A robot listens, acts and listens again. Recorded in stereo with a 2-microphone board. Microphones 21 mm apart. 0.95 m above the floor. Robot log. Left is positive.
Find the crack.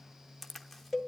cmd yaw +30
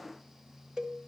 cmd idle
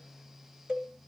end: I heard a crack, but can't make it out now. It was about 25° right or 145° left.